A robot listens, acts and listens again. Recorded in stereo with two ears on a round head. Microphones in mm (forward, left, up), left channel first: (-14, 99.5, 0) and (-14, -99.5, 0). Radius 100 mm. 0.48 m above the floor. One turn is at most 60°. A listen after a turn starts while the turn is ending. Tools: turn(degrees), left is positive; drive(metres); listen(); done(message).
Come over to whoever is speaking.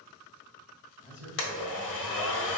turn(degrees=-30)
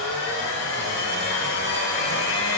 listen()
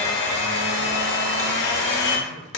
listen()
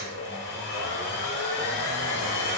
done("I heard a man speaking, but can't make it out now. It was about 25° left or 145° right. I did not reach it.")